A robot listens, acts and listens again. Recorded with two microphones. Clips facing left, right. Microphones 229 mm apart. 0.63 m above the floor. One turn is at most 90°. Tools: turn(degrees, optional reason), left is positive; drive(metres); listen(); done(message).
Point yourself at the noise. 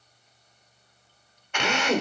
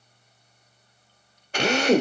turn(degrees=-35, reason="The drill: about 35° right or 145° right.")
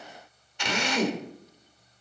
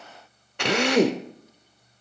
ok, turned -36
turn(degrees=-90, reason="So it is at 105° right.")
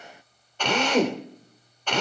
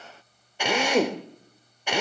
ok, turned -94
turn(degrees=-10, reason="The drill is now 10° right.")
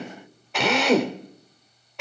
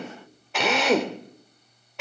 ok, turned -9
done("Found it: a drill, straight ahead.")